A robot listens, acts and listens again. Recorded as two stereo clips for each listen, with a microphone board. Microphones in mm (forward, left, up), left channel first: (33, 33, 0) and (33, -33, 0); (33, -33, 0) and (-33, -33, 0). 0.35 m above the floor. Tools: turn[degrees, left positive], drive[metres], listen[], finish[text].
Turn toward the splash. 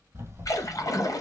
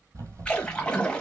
Thought: The splash: 75° left.
Action: turn[75]
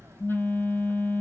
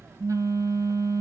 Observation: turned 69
Action: finish[I heard a splash from this way, but can't make it out now.]